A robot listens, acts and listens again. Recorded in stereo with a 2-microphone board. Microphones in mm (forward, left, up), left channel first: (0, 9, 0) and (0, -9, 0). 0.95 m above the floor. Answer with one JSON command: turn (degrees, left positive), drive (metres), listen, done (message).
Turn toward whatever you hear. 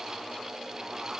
{"listen": true}
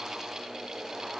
{"listen": true}
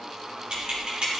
{"turn": -50}
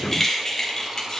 {"turn": 40}
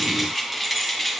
{"turn": 10}
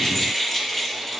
{"turn": 10}
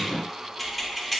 {"done": "Facing the keys jangling, 1 to 2 m away."}